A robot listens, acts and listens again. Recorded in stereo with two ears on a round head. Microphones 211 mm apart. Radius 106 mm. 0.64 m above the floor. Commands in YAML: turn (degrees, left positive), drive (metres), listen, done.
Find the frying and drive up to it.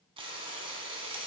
turn: -25
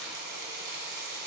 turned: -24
turn: -135
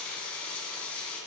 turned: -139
drive: 1.0
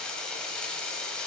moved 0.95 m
drive: 1.0
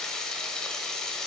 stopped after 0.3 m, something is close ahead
done: "I am next to the frying."